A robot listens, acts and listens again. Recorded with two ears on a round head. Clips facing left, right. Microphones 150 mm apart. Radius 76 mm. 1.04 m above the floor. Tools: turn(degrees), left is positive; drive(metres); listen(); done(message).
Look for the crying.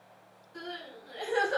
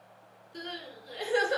turn(degrees=-35)
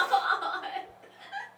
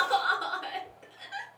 turn(degrees=-105)
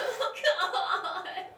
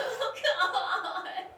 done("Facing the crying.")